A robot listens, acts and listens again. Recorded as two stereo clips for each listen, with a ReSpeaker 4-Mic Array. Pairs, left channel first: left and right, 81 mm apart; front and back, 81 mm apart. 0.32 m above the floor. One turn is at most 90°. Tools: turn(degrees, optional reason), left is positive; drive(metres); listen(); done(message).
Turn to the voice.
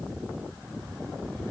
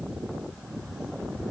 listen()
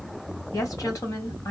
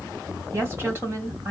turn(degrees=90, reason="The woman speaking: 120° left.")
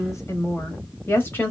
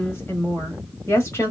turn(degrees=35, reason="The woman speaking is now 35° left.")
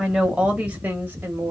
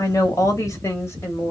turn(degrees=-40, reason="The woman speaking is now 40° right.")
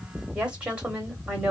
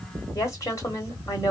turn(degrees=-20, reason="The woman speaking is now 20° right.")
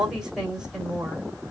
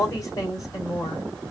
done("Facing the woman speaking, 1 to 2 m away.")